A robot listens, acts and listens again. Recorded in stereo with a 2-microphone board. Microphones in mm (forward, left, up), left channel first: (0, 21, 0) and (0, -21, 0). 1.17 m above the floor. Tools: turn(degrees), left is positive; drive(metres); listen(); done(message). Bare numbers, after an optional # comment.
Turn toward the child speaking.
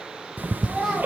turn(-30)
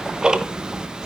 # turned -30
listen()
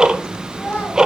# So it is at 35° left.
turn(35)
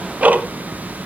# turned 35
listen()
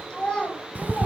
# The child speaking is now 25° left.
turn(25)
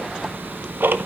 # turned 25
listen()
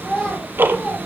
# The child speaking is now 15° left.
turn(15)
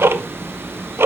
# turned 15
listen()
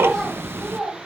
done("Facing the child speaking.")